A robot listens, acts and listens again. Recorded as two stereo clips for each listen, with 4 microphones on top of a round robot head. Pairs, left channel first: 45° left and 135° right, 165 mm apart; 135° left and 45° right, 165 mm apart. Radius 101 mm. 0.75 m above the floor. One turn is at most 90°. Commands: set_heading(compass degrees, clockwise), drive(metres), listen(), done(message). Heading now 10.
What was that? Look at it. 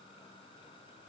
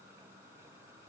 listen()
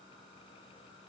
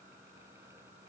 listen()
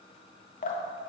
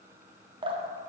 set_heading(0)
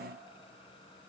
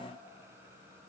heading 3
listen()
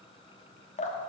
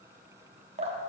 done("Facing the dripping, 1 to 2 m away.")